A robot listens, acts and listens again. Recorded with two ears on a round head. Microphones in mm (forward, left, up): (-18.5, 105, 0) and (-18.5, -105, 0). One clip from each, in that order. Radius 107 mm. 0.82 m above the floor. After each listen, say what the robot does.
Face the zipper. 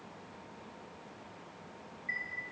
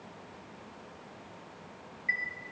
Keep listening.
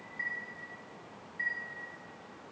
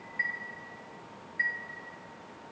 Keep listening.
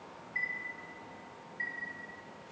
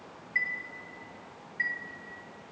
I can't make out a zipper to turn to.